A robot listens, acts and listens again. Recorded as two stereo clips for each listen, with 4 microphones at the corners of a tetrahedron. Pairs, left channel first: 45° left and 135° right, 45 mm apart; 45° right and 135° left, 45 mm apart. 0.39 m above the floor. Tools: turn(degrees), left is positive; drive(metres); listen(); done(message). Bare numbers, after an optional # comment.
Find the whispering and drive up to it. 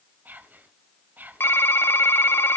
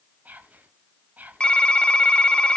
# The whispering: straight behind.
turn(180)
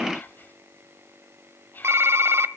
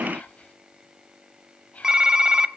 # The whispering is now 10° left.
turn(10)
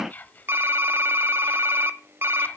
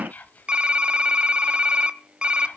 drive(1.0)
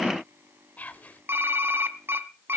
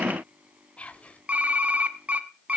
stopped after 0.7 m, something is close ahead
done("I am next to the whispering.")